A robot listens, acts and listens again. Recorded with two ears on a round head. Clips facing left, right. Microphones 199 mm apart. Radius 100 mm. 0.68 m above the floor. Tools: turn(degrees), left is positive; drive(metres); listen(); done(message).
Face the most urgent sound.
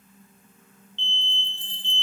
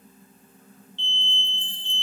turn(degrees=20)
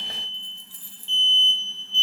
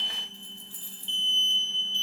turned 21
turn(degrees=140)
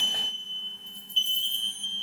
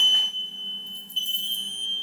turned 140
done("Facing the alarm.")